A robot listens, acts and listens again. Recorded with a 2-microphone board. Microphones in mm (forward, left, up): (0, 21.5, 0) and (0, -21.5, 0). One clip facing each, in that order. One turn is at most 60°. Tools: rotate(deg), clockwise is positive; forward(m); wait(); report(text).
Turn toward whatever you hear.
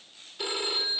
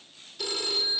rotate(-20)
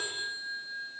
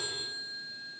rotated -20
rotate(-60)
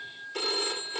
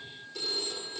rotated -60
rotate(-60)
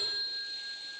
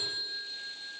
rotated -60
rotate(-10)
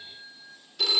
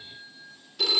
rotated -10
report("Facing the phone ringing, 2 to 4 m away.")